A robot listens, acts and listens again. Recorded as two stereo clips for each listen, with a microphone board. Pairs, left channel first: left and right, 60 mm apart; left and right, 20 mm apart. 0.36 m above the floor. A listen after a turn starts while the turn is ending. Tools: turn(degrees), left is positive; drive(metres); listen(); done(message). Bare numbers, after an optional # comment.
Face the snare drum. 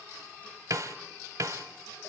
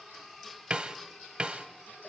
# The snare drum: about 65° right or 115° right.
turn(-65)
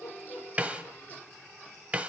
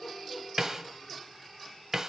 # So it is at 25° right.
turn(-25)
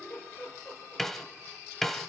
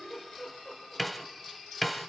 done("Found it: a snare drum, straight ahead, 1 to 2 m away.")